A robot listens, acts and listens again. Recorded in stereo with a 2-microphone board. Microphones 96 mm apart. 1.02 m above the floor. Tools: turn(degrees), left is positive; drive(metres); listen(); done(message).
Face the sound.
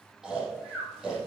turn(degrees=-30)
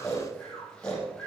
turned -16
turn(degrees=10)
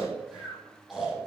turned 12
done("Found it: snoring, straight ahead, over 4 m away.")